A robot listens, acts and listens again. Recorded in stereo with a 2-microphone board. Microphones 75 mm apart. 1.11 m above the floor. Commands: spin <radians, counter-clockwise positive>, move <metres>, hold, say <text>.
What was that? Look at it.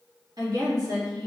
spin -1.05
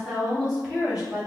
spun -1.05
spin -0.26
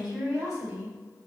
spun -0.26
say Found it: a woman speaking, straight ahead, 2 to 4 m away.